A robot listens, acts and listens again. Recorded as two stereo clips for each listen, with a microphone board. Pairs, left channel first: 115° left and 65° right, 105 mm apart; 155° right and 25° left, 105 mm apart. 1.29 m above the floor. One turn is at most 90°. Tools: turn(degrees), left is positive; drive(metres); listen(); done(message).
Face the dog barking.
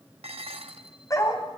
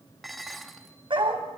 turn(degrees=60)
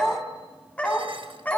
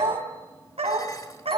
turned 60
turn(degrees=40)
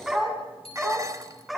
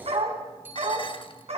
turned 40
turn(degrees=20)
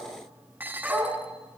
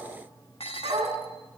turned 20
turn(degrees=15)
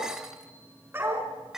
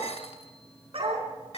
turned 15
done("Found it: a dog barking, straight ahead.")